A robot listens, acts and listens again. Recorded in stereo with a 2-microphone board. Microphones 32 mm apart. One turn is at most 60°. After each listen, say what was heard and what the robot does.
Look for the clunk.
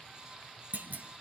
The clunk: about 70° right or 110° right. Turn 60° right.
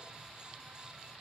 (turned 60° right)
Keep listening.
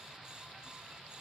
I heard a clunk, but can't make it out now. It was about 10° right or 50° right.